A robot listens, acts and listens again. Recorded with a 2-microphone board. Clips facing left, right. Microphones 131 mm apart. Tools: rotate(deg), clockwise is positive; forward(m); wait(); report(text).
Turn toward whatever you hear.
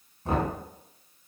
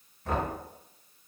rotate(-30)
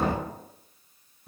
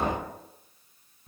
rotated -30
report("Facing the knocking, 1 to 2 m away.")